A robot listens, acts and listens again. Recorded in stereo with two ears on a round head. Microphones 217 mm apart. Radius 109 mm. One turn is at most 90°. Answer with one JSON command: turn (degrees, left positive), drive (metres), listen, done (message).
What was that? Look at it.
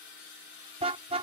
{"turn": -25}
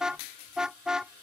{"done": "Found it: a car horn, straight ahead."}